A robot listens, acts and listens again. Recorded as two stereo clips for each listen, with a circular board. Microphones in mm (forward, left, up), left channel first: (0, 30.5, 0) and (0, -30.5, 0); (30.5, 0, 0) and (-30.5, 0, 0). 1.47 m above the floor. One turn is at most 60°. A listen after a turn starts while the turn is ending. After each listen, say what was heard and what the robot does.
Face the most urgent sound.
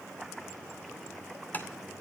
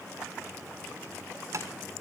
Keep listening.
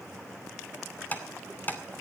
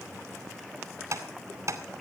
Keep listening.
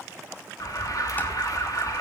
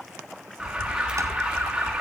The alarm: 100° left. Turn 60° left.
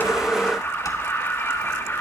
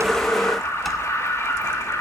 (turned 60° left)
The alarm is now 40° left. Turn 40° left.
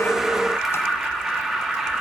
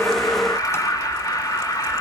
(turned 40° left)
Found it: an alarm, straight ahead.